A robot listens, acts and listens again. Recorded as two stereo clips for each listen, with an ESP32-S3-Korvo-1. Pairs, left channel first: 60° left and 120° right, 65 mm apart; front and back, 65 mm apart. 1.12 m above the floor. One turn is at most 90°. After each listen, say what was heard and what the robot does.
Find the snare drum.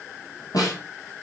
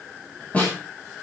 The snare drum: 70° left. Turn 70° left.
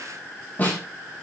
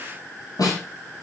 Facing the snare drum.